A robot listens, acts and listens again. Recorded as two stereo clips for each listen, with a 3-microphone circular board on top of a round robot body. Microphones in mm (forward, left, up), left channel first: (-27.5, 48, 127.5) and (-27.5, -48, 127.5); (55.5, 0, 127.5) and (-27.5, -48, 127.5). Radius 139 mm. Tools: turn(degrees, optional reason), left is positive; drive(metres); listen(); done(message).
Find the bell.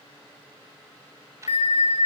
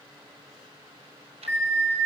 turn(degrees=105, reason="The bell: 105° left.")
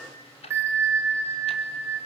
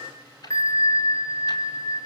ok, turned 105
turn(degrees=-25, reason="The bell is now 25° right.")
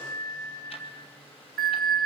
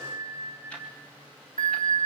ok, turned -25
done("Facing the bell.")